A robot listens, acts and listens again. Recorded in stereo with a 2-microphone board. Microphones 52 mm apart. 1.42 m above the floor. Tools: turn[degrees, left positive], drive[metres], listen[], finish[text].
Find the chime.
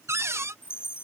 Thought: The chime: about 50° left or 130° left.
Action: turn[50]
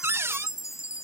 Thought: So it is at 80° left.
Action: turn[80]
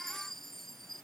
Action: finish[Found it: a chime, straight ahead.]